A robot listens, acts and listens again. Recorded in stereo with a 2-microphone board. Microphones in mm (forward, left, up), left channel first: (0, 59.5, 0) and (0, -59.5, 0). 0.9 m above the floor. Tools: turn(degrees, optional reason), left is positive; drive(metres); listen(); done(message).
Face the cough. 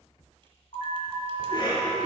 turn(degrees=40, reason="The cough: about 40° left or 140° left.")
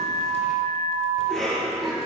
done("Facing the cough.")